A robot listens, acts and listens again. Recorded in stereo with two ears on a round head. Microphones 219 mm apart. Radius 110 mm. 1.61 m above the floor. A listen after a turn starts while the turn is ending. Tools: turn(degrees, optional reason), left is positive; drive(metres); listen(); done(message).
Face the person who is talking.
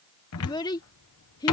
turn(degrees=15, reason="The child speaking: about 15° left or 165° left.")
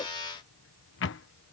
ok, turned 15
listen()
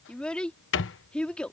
done("Facing the child speaking.")